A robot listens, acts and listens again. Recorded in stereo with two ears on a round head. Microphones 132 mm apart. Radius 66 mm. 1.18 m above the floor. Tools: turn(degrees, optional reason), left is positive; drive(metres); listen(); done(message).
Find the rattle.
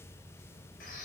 listen()
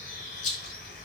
turn(degrees=50, reason="The rattle: about 50° left or 130° left.")
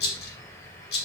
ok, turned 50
turn(degrees=80, reason="So it is at 80° left.")
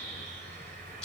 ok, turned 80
done("Facing the rattle, 2 to 4 m away.")